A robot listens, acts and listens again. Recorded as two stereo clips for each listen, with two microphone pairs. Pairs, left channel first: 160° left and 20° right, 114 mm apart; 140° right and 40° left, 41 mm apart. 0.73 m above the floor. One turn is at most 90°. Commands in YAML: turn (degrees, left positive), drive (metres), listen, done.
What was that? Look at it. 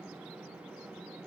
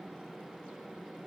listen: true
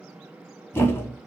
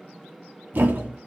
turn: 85
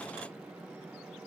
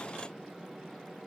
done: "I heard a thud from this way, but can't make it out now."